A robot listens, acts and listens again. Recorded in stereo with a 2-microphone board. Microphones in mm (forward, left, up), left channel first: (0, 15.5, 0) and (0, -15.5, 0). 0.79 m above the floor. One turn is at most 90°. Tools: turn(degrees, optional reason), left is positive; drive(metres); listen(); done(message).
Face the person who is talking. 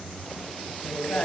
turn(degrees=65, reason="The woman speaking: about 65° left or 115° left.")
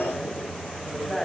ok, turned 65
turn(degrees=10, reason="So it is at 10° left.")
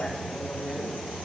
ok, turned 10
done("Found it: a woman speaking, straight ahead.")